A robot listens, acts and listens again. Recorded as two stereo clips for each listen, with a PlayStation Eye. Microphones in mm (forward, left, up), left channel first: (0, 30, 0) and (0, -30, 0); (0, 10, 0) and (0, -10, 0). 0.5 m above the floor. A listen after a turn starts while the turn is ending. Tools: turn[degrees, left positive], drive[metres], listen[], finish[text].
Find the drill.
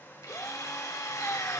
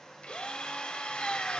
Thought: The drill: about 75° left or 105° left.
Action: turn[75]
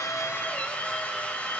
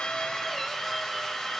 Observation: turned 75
Thought: So it is at 25° left.
Action: turn[25]
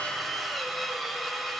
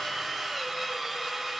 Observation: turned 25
Action: finish[Found it: a drill, straight ahead.]